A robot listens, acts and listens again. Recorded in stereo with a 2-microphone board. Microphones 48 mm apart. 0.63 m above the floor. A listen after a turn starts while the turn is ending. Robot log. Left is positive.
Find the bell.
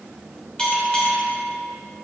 note: The bell: about 20° left or 160° left.
cmd yaw +20
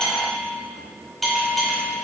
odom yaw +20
end: Facing the bell, 2 to 4 m away.